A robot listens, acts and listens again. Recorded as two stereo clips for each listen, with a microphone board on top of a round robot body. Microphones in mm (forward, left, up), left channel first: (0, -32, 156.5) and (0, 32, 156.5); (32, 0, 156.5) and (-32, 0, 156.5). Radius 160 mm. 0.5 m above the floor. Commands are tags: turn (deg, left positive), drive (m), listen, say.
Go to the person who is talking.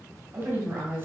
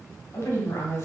<turn deg="40"/>
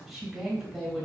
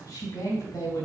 <drive m="1.0"/>
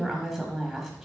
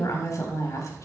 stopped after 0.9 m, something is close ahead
<turn deg="10"/>
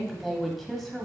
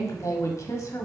<say>Arrived at the woman speaking, straight ahead.</say>